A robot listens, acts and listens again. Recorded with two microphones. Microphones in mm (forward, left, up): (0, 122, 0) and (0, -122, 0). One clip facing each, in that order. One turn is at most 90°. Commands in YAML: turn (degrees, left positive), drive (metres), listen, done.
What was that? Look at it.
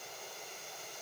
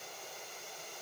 listen: true
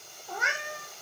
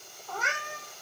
turn: 30
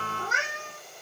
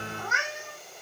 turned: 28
turn: 90
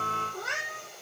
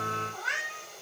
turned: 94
turn: 45
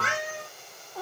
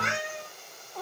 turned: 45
done: "Found it: a cat meowing, straight ahead, 1 to 2 m away."